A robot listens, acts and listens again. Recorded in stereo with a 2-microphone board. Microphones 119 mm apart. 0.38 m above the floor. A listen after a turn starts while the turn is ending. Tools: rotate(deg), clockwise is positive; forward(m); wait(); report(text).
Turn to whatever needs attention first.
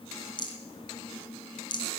wait()
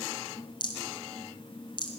wait()
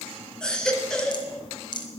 rotate(-30)
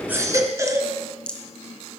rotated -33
rotate(25)
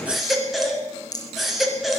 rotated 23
report("Facing the baby crying, 1 to 2 m away.")